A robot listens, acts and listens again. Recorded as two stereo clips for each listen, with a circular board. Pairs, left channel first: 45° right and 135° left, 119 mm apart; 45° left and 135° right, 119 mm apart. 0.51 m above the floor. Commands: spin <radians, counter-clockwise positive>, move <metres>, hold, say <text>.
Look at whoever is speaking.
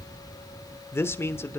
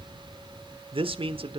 spin -1.92
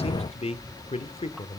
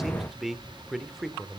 spin -0.79
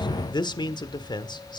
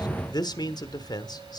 say Found it: a man speaking, straight ahead, 1 to 2 m away.